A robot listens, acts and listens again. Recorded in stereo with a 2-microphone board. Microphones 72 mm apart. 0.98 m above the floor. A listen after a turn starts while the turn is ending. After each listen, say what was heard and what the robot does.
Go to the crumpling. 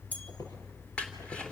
Turn 30° left.
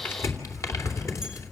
So it is at 135° left. Turn 135° left.
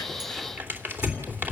The crumpling is now 25° right. Turn 25° right.
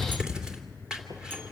The crumpling is now 10° right. Turn 10° right.
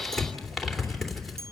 Drive 1.0 m forward.
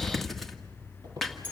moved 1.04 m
Drive 1.0 m forward.
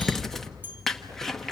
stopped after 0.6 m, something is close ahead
I am next to the crumpling.